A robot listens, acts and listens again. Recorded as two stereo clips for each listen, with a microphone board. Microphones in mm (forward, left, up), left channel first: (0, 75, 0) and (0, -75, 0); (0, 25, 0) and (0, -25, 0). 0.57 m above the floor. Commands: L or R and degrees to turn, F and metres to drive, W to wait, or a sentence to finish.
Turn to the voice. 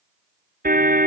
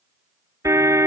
W
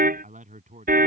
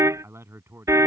R60
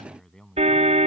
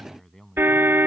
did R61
Found it: a man speaking, straight ahead.